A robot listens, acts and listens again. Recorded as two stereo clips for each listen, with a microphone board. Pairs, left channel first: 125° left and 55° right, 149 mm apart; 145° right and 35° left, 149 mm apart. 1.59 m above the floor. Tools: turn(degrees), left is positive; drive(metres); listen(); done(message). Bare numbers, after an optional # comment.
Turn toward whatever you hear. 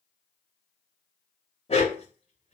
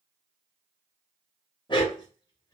# The dog barking: 160° left.
turn(160)
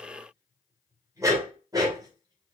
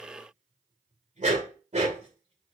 done("Facing the dog barking.")